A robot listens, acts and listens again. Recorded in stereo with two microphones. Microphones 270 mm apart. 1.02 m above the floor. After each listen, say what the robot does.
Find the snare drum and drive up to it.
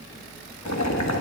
Keep listening.
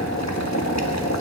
Keep listening.
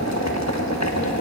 I can't make out a snare drum to turn to.